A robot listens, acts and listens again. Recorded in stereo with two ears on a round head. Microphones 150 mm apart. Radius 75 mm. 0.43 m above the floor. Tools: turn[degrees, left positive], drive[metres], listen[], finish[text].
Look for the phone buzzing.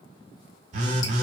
Thought: The phone buzzing: about 45° right or 135° right.
Action: turn[-45]
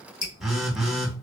Action: finish[Found it: a phone buzzing, straight ahead, under 1 m away.]